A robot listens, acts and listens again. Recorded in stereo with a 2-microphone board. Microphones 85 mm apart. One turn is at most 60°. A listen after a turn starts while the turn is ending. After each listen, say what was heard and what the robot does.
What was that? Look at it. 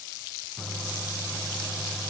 Turn 30° left.
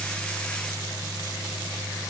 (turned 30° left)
So it is at 135° left. Turn 60° left.
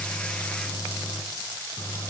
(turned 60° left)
The microwave is now 60° left. Turn 60° left.
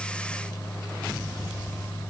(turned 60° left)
The microwave is now 35° left. Turn 35° left.
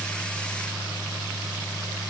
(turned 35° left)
Found it: a microwave, straight ahead.